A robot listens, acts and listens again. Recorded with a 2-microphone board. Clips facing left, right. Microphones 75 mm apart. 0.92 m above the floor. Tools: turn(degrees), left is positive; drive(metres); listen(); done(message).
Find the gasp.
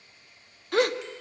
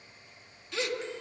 turn(degrees=45)
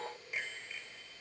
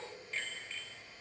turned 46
listen()
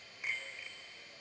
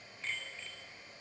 done("I heard a gasp, but can't make it out now. It was about straight ahead or 85° left.")